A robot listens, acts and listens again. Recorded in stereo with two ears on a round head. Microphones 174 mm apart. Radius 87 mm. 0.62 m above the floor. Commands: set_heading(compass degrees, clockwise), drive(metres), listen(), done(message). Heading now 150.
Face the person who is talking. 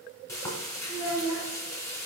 set_heading(115)
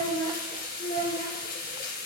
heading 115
set_heading(85)
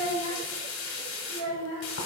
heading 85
set_heading(55)
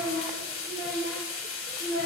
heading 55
set_heading(45)
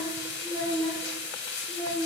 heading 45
done("Facing the child speaking.")